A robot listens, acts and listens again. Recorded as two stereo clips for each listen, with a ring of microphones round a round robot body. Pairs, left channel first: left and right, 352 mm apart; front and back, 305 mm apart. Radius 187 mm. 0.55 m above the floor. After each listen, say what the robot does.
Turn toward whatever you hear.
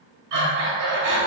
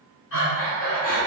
Turn 55° right.
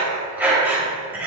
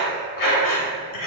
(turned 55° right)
Found it: breathing, straight ahead.